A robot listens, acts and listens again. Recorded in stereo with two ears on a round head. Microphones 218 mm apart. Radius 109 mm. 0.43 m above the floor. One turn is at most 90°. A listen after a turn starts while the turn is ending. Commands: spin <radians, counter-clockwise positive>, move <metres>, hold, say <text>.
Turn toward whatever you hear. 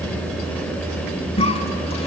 spin 0.44
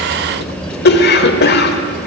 spin 1.57
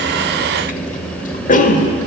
spin 0.70
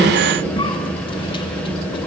spin 0.44
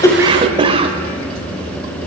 spin -0.44
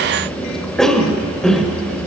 say Facing the cough, 1 to 2 m away.